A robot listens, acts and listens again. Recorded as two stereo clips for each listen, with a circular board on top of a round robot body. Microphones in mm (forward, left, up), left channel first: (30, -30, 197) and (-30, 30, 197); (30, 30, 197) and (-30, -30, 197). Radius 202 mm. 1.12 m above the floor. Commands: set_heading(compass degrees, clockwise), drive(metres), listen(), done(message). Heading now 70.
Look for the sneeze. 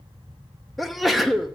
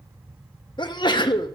set_heading(25)
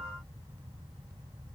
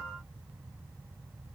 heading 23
done("Facing where the sneeze came from. I can't hear it now.")